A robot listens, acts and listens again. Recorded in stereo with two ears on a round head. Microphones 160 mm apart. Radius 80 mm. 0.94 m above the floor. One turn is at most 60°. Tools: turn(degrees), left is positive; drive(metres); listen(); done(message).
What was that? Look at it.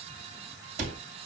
turn(degrees=-45)
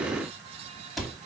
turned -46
done("Found it: a cupboard door, straight ahead, 2 to 4 m away.")